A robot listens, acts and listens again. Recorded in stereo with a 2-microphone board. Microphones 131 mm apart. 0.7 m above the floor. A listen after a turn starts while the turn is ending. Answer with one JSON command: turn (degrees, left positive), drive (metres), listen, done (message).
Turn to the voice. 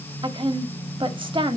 {"turn": -45}
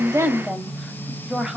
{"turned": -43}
{"done": "Facing the woman speaking, 1 to 2 m away."}